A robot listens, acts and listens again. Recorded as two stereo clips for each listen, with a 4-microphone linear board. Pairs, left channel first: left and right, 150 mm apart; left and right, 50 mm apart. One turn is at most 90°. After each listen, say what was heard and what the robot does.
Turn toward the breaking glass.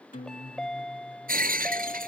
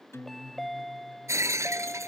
Turn 90° right.
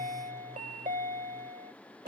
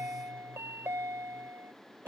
I heard breaking glass from this way, but can't make it out now.